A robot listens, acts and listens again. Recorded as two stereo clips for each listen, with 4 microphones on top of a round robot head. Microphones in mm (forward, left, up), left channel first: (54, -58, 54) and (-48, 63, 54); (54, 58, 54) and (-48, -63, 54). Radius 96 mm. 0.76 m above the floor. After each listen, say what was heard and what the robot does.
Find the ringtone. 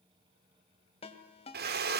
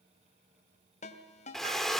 Found it: a ringtone, straight ahead.